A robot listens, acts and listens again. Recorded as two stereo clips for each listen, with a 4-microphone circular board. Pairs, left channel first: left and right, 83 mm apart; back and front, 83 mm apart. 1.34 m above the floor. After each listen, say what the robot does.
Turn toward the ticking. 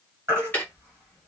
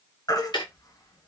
Turn 155° left.
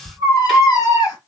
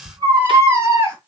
Keep listening.
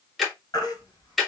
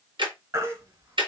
Facing the ticking.